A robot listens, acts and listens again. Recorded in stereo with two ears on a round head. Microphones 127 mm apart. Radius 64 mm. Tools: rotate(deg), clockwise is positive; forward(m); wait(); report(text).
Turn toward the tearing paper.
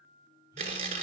rotate(60)
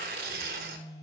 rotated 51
rotate(70)
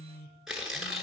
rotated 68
report("Facing the tearing paper, 1 to 2 m away.")